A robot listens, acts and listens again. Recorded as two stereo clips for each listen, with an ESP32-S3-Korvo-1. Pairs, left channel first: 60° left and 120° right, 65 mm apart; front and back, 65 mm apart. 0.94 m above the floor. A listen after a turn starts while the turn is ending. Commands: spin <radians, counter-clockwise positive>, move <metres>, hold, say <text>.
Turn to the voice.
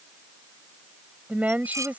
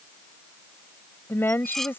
spin -0.96
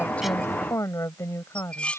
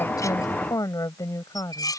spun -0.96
spin 0.35
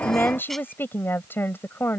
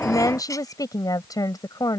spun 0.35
say Found it: a woman speaking, straight ahead.